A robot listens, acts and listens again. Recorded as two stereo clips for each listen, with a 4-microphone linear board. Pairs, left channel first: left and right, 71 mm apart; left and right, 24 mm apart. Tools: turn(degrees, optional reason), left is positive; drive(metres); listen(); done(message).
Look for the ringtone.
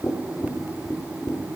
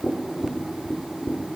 listen()
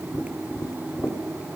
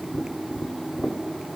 listen()
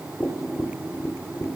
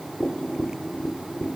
done("I can't make out a ringtone to turn to.")